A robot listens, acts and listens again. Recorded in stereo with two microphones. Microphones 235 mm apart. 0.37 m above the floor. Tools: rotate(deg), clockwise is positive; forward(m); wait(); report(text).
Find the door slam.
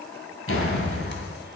rotate(-65)
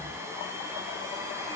wait()
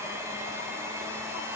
report("I heard a door slam, but can't make it out now. It was about straight ahead or 50° left.")